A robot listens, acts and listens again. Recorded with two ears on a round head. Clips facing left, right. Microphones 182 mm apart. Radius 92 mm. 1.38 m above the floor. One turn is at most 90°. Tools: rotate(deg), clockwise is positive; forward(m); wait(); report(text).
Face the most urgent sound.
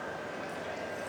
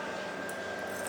wait()
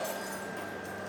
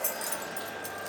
wait()
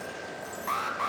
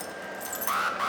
rotate(30)
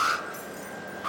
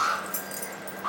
rotate(-25)
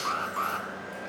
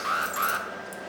rotate(15)
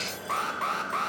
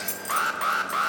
rotate(10)
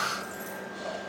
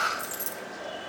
report("Facing the alarm, under 1 m away.")